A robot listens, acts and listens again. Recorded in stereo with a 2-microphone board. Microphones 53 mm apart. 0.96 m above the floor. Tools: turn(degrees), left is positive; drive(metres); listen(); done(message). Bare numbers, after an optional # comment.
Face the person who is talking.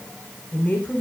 # The woman speaking: about 30° left or 150° left.
turn(30)
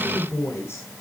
# So it is at 125° left.
turn(125)
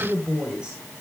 # The woman speaking is now 15° right.
turn(-15)
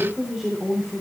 done("Facing the woman speaking, 2 to 4 m away.")